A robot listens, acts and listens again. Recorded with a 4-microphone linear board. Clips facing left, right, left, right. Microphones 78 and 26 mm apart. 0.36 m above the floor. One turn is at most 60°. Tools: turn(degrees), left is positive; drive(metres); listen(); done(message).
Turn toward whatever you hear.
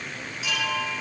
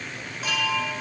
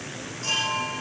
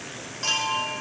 turn(degrees=-40)
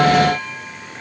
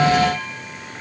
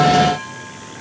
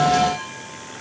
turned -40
done("Facing the chime, over 4 m away.")